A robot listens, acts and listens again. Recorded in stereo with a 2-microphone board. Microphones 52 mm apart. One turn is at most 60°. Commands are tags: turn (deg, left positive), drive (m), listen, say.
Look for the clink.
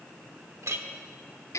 <turn deg="-60"/>
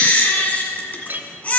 <turn deg="-50"/>
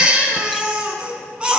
<listen/>
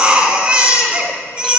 <listen/>
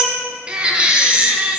<say>Facing where the clink came from. I can't hear it now.</say>